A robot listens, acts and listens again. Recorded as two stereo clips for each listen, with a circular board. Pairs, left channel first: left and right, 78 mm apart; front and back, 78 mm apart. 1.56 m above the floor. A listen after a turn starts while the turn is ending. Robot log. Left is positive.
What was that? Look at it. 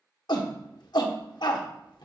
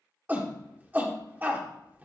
note: The shout: 115° left.
cmd yaw +115
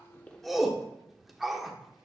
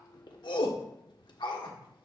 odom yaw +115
end: Facing the shout, 1 to 2 m away.